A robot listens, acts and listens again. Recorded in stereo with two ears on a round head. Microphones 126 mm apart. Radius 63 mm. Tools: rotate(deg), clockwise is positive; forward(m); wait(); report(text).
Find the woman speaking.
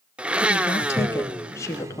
rotate(-20)
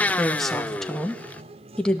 rotate(-30)
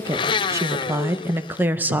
rotate(10)
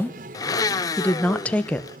rotate(-10)
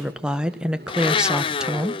report("Facing the woman speaking, 1 to 2 m away.")